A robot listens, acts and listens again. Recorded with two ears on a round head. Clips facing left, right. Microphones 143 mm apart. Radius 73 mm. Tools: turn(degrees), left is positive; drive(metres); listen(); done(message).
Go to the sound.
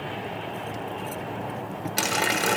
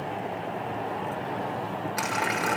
turn(degrees=35)
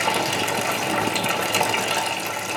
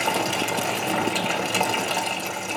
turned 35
drive(metres=1.0)
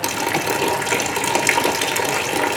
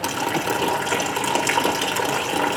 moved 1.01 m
turn(degrees=10)
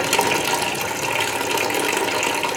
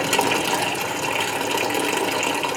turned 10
drive(metres=1.0)
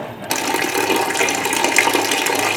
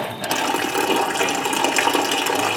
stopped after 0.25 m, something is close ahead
turn(degrees=10)
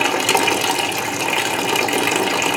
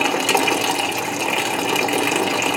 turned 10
done("Arrived at the running tap, straight ahead.")